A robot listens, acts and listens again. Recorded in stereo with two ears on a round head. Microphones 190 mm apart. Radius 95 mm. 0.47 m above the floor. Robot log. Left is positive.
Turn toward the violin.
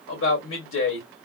cmd idle
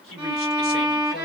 cmd yaw -30
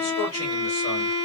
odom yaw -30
note: So it is at 25° left.
cmd yaw +25
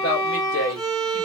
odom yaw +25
note: The violin is now 30° left.
cmd yaw +30
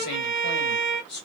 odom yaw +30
note: The violin is now 30° right.
cmd yaw -30
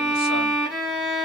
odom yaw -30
end: Found it: a violin, straight ahead, 1 to 2 m away.